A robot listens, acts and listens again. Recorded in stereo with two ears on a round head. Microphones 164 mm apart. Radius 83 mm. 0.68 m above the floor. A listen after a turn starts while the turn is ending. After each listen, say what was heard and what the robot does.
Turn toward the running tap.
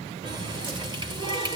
The running tap: about 25° right or 155° right. Turn 25° right.
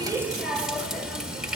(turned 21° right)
Found it: a running tap, straight ahead.